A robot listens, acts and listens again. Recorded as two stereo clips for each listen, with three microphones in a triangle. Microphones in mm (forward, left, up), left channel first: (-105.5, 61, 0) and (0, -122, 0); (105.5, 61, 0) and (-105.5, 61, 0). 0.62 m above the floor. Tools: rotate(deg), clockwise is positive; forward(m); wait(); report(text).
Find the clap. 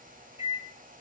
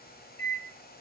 wait()
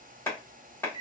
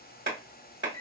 rotate(165)
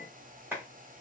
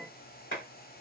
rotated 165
rotate(-20)
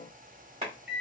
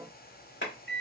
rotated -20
report("Found it: a clap, straight ahead, 1 to 2 m away.")